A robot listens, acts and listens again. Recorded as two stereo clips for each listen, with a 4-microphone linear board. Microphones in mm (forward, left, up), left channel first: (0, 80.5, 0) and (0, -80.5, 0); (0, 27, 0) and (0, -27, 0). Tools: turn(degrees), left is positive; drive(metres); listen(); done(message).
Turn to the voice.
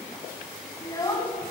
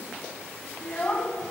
turn(degrees=25)
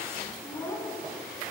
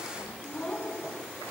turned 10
turn(degrees=20)
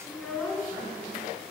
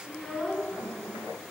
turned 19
turn(degrees=30)
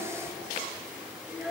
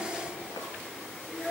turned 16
done("Found it: a child speaking, straight ahead.")